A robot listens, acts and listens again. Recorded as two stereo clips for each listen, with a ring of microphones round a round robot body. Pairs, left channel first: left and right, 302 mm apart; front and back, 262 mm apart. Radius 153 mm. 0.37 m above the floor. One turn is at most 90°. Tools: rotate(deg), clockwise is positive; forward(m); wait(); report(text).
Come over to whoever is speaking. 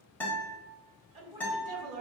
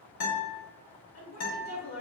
rotate(25)
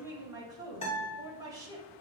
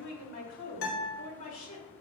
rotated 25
rotate(10)
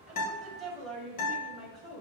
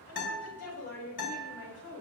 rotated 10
forward(1.0)
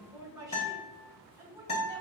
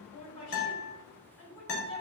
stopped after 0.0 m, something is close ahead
rotate(10)
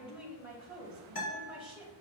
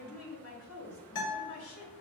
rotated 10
report("Blocked. The woman speaking is further on, straight ahead.")